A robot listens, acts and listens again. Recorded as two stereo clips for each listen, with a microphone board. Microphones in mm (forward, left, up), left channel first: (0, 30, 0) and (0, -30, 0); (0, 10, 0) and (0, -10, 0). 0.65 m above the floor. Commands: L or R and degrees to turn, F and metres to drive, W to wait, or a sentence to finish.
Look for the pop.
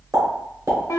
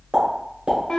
R65
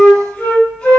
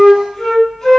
W
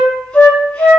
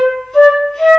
I heard a pop, but can't make it out now. It was about straight ahead or 50° right.